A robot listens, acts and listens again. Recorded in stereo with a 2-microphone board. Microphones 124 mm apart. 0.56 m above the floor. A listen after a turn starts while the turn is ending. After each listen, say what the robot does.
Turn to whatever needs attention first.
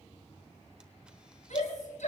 Turn 90° left.
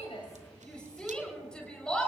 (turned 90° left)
Found it: a shout, straight ahead.